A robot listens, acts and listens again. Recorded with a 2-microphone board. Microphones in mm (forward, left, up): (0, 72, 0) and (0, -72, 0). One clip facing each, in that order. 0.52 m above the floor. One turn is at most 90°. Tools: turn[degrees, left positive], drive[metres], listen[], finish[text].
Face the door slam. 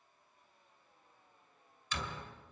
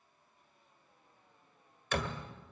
Thought: The door slam: about 65° right or 115° right.
Action: turn[-65]
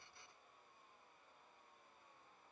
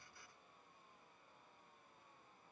Action: listen[]
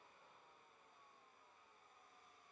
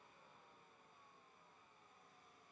Action: finish[I heard a door slam, but can't make it out now. It was about straight ahead or 50° right.]